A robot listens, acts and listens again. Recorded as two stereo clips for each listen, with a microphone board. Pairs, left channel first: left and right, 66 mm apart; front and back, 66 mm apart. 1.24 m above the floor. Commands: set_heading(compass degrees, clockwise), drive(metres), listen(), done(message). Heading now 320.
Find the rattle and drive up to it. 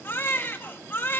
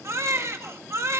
listen()
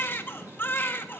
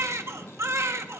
listen()
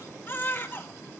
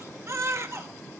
done("I can't make out a rattle to turn to.")